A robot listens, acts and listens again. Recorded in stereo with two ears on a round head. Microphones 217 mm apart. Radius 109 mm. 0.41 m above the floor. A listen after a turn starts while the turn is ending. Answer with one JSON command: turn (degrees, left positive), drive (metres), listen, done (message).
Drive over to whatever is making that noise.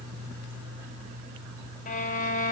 {"turn": 35}
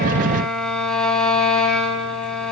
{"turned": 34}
{"drive": 1.0}
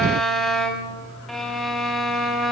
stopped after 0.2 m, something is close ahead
{"done": "Blocked. The violin is further on, straight ahead."}